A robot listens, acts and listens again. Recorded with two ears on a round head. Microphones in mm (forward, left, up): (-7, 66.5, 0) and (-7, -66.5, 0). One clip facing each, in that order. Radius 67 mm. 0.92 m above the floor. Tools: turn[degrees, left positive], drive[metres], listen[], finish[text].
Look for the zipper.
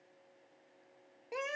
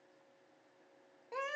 Action: listen[]
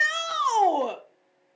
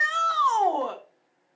Action: listen[]
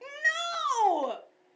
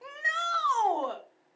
Action: finish[I can't make out a zipper to turn to.]